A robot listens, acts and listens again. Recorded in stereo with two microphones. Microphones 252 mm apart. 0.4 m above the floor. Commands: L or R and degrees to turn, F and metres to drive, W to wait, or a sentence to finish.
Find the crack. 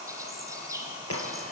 L70
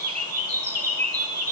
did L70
W
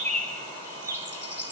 I heard a crack, but can't make it out now. It was about straight ahead or 40° left.